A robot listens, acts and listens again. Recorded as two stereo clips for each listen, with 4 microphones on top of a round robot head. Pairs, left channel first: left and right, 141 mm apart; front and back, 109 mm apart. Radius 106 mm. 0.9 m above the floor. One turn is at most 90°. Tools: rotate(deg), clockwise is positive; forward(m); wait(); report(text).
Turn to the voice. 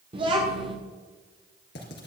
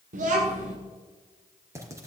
rotate(90)
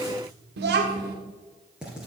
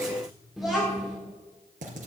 rotate(90)
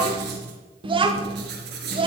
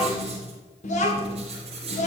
rotate(35)
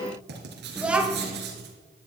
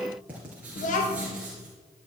report("Found it: a child speaking, straight ahead, 1 to 2 m away.")